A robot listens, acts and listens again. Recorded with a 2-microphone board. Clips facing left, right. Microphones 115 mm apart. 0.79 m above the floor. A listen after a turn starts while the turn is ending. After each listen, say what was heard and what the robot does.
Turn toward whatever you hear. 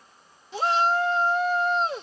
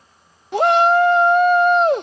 The shout: about 65° right or 115° right. Turn 65° right.
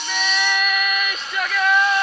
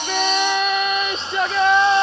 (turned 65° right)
So it is at 30° right. Turn 30° right.
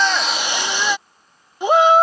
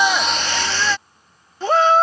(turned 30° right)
The shout is now 15° left. Turn 15° left.
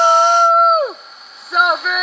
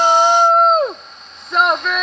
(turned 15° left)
Facing the shout.